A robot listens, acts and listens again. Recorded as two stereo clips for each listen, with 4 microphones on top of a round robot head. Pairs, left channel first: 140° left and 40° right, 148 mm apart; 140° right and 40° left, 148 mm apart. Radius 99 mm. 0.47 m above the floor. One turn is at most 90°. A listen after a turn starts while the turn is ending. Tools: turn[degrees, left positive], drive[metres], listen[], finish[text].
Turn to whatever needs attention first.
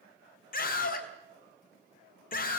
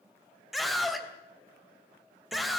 Thought: The scream: 130° left.
Action: turn[90]
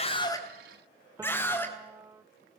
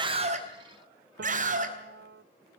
Thought: The scream is now 65° left.
Action: turn[65]
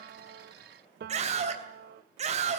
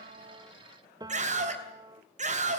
Action: finish[Found it: a scream, straight ahead, 2 to 4 m away.]